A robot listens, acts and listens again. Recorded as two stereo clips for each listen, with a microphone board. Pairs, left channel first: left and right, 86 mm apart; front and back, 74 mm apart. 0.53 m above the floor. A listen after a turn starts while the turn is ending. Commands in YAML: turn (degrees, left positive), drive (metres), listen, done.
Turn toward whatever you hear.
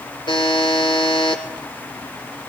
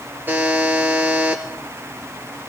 turn: 115
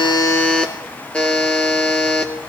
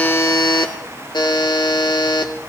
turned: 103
turn: 15
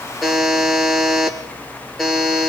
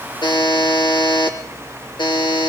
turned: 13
done: "Found it: a buzzer, straight ahead, 2 to 4 m away."